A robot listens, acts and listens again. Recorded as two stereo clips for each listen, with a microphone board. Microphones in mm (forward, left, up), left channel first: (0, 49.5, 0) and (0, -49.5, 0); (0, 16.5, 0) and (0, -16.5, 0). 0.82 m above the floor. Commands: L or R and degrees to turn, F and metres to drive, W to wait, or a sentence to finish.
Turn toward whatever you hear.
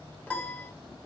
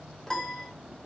L20
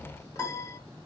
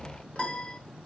L145
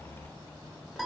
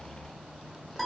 Found it: a piano, straight ahead.